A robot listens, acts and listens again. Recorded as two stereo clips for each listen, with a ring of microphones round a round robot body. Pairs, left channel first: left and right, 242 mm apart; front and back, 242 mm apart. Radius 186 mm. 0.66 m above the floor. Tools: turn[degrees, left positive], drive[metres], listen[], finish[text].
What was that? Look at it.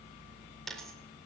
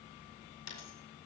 Action: finish[Facing the dropped coin.]